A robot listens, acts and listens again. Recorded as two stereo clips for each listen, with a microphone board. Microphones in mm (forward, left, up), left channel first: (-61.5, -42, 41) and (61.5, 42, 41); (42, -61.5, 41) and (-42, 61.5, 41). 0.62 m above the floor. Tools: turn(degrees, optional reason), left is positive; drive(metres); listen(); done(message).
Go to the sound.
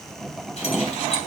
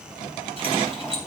turn(degrees=170, reason="The keys jangling: 170° left.")
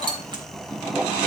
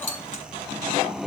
turn(degrees=-25, reason="The keys jangling is now 25° right.")
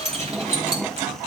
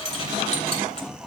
turn(degrees=-10, reason="The keys jangling is now 10° right.")
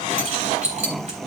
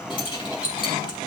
drive(metres=1.0)
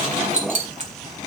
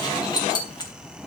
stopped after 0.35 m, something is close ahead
done("Blocked. The keys jangling is further on, straight ahead.")